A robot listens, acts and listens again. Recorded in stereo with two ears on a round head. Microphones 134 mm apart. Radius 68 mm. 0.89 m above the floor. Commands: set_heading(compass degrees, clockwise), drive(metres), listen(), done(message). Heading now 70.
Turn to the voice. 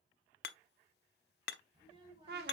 set_heading(105)
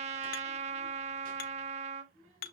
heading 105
set_heading(225)
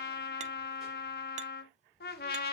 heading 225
done("Found it: a child speaking, straight ahead, over 4 m away.")